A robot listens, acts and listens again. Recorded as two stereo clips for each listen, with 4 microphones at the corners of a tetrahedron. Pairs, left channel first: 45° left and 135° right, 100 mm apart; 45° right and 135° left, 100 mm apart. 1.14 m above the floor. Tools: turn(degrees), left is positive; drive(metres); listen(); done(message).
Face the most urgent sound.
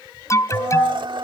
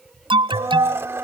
turn(degrees=105)
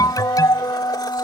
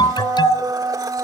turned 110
done("Found it: an alarm, straight ahead.")